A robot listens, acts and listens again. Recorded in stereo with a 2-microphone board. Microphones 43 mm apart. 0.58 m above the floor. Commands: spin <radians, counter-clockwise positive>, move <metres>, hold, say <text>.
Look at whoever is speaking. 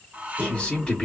spin 0.35
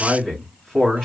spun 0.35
say Facing the man speaking, 2 to 4 m away.